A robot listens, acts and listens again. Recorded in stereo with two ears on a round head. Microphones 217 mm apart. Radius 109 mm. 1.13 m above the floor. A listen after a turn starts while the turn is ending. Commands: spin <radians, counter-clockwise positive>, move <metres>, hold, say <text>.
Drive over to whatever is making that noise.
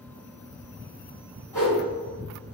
spin 0.52
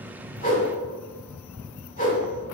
spin 2.44
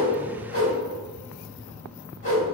spin 0.79
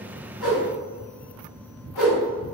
move 1.0
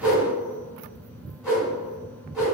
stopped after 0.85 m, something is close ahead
say Arrived at the whoosh, straight ahead.